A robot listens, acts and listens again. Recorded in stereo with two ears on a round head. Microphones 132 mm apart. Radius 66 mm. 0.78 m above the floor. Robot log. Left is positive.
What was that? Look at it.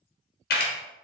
note: The camera shutter: about 65° left or 115° left.
cmd yaw +65
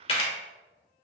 note: So it is at 40° left.
cmd yaw +40
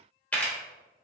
note: The camera shutter is now 10° left.
cmd yaw +10
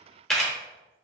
end: Found it: a camera shutter, straight ahead, under 1 m away.